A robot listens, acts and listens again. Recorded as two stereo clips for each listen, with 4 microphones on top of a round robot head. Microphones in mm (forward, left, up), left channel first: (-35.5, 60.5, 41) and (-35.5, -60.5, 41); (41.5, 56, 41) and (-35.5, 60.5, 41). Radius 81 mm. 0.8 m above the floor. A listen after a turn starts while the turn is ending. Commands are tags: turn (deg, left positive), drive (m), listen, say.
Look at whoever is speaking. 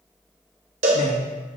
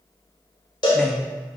<turn deg="85"/>
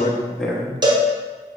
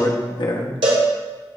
<say>Facing the man speaking.</say>